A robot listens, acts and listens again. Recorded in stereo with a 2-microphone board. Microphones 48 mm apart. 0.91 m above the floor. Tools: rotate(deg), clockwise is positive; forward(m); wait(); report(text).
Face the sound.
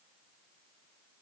wait()
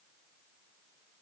wait()
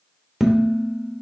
rotate(-30)
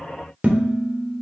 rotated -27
rotate(25)
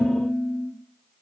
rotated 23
report("Facing the dishes clattering, under 1 m away.")